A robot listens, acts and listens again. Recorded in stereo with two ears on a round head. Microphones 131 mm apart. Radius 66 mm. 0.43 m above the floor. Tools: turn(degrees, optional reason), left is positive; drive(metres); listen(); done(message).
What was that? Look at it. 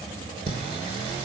turn(degrees=-40, reason="The singing: about 40° right or 140° right.")
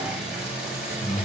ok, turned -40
done("Found it: singing, straight ahead.")